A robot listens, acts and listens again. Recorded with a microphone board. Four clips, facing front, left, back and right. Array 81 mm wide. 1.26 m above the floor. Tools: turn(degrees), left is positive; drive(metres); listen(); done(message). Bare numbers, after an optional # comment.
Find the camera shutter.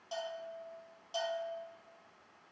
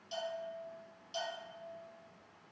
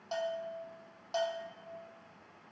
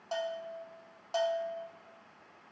listen()
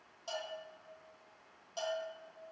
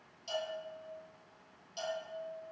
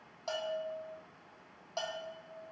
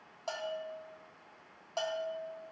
listen()
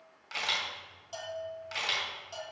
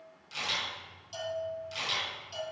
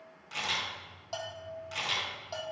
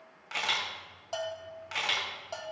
# The camera shutter: 70° right.
turn(-70)
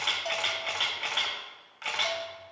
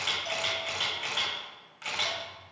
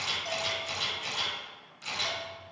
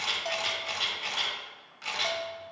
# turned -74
done("Facing the camera shutter, 2 to 4 m away.")